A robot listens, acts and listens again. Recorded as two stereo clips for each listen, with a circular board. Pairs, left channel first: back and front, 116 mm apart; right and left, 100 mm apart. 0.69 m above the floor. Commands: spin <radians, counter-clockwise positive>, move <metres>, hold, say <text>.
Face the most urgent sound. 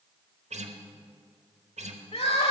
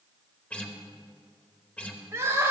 spin 2.71
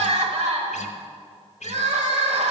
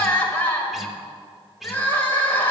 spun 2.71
spin -0.26
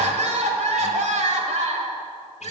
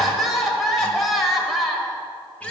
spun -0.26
say Facing the crying, 1 to 2 m away.